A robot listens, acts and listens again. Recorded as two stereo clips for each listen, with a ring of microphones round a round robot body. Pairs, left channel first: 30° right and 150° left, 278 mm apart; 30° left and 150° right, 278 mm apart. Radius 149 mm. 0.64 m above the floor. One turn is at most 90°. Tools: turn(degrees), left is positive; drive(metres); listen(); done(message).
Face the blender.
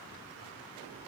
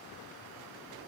listen()
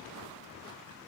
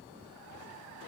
listen()
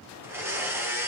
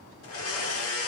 turn(degrees=70)
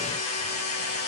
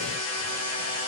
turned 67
done("Facing the blender, 1 to 2 m away.")